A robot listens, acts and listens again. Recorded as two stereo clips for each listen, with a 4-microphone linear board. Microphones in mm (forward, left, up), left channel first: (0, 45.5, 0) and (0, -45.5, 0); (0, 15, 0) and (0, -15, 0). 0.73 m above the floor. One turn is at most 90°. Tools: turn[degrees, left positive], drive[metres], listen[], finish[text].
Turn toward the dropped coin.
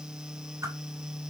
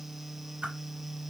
Action: listen[]
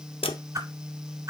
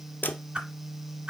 Action: turn[90]
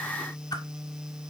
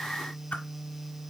Action: finish[Facing where the dropped coin came from. I can't hear it now.]